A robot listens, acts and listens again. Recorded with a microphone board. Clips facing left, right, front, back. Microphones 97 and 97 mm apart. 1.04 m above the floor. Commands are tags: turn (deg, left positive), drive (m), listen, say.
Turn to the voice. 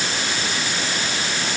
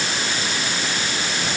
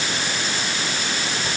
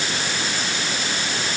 <listen/>
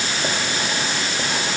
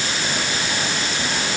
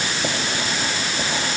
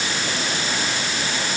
<listen/>
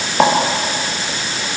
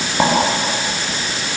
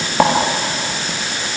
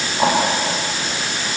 <say>I can't make out anyone speaking, only writing.</say>